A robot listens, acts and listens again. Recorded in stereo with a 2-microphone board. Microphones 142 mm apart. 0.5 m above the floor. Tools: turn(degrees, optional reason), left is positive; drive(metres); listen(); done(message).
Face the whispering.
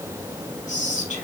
turn(degrees=65, reason="The whispering: about 65° left or 115° left.")
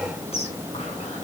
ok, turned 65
listen()
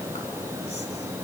listen()
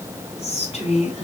turn(degrees=50, reason="So it is at 50° left.")
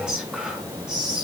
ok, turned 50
done("Facing the whispering.")